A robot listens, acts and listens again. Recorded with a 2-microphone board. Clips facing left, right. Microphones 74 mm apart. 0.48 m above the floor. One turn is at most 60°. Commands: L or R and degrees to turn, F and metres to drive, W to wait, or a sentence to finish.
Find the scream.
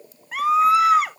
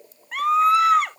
L30
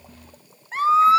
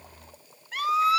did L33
L60
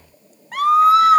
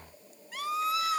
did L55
L60
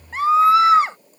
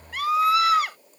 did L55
L30
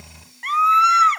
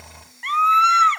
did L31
Facing the scream.